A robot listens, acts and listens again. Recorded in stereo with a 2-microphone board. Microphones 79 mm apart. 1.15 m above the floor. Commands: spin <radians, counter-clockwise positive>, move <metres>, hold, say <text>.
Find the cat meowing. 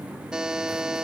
hold
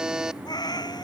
spin 1.13
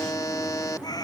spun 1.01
spin 0.96
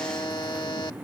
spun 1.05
hold
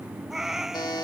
spin -0.17
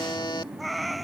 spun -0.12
say Facing the cat meowing.